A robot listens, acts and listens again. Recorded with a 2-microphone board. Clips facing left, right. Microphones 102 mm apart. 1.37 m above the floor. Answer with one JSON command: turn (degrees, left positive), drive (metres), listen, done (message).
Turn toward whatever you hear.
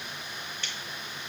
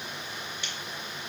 {"turn": -30}
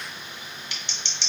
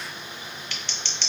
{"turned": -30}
{"turn": 15}
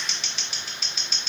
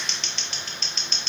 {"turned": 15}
{"done": "Found it: scissors, straight ahead, under 1 m away."}